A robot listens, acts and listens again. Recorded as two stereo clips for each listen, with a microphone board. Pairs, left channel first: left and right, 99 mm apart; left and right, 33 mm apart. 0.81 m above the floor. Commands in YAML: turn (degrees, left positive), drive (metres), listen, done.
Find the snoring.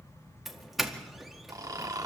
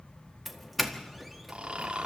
turn: -35
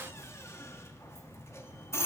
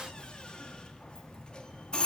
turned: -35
listen: true
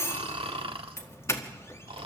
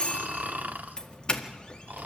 turn: -105
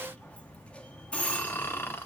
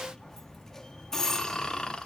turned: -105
turn: 25
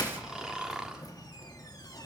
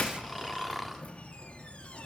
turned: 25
done: "Found it: snoring, straight ahead, 1 to 2 m away."